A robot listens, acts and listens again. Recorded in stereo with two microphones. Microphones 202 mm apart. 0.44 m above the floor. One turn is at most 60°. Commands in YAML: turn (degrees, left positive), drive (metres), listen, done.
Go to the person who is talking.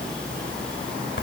listen: true
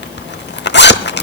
listen: true
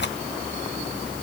done: "I can't make out anyone speaking, only a zipper."